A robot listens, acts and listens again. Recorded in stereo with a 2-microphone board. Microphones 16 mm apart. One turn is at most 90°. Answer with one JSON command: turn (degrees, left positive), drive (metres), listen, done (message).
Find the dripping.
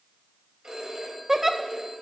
{"listen": true}
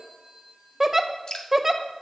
{"turn": 60}
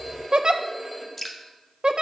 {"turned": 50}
{"turn": 20}
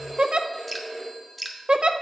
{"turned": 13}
{"done": "Facing the dripping."}